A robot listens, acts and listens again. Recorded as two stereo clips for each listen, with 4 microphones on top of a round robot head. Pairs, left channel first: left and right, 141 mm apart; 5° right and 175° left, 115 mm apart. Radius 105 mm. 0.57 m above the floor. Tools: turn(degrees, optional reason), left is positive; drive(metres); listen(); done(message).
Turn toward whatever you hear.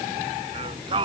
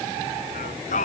turn(degrees=-25, reason="The singing: 25° right.")
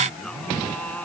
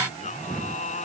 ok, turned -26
done("Facing the singing.")